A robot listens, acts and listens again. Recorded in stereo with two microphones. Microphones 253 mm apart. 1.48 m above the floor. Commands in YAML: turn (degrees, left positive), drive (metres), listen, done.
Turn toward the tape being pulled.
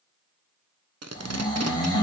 turn: -90
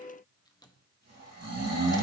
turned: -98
turn: 10
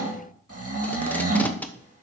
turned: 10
done: "Facing the tape being pulled."